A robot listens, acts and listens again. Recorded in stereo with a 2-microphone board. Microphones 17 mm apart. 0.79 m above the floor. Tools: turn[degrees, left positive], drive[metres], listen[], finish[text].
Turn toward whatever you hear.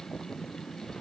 Action: listen[]
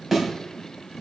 Action: turn[-30]
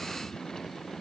Action: listen[]
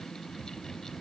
Action: finish[I heard a thud, but can't make it out now. It was about 20° left or 140° right.]